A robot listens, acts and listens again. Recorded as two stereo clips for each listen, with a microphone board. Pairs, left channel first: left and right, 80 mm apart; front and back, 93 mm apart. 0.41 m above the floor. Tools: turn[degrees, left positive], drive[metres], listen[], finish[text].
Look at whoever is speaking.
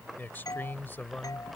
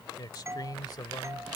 Thought: The man speaking: 30° left.
Action: turn[30]
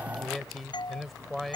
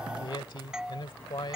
Action: finish[Facing the man speaking.]